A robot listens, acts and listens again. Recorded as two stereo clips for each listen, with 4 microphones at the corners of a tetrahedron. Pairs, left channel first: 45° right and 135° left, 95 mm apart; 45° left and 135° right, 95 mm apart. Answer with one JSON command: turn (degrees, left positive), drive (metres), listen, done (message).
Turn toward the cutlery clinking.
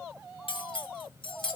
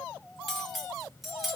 {"turn": -45}
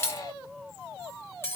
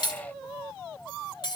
{"turn": 15}
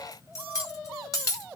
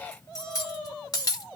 {"done": "Facing the cutlery clinking."}